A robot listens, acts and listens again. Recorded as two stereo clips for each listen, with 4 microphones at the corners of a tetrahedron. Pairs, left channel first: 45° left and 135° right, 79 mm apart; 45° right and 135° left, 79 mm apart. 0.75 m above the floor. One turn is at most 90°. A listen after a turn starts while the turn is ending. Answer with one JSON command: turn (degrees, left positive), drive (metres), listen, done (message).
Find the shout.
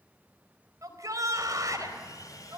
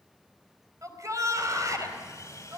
{"turn": 90}
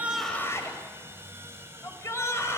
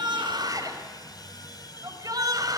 {"turn": 90}
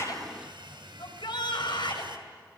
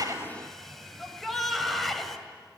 {"turn": 45}
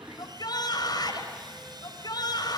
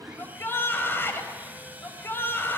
{"turn": 15}
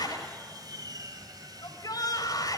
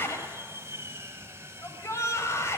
{"done": "Facing the shout."}